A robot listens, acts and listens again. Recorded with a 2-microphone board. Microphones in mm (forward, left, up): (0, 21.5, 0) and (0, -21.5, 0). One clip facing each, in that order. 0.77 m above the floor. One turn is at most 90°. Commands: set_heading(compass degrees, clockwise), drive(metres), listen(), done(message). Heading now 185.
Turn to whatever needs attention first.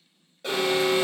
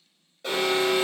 set_heading(155)
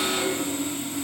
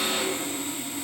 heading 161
set_heading(186)
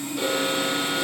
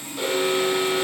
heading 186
done("Facing the alarm.")